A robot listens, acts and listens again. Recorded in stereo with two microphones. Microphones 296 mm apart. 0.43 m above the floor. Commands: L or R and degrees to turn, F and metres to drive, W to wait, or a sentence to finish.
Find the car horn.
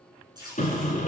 L25
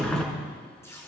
Found it: a car horn, straight ahead, 2 to 4 m away.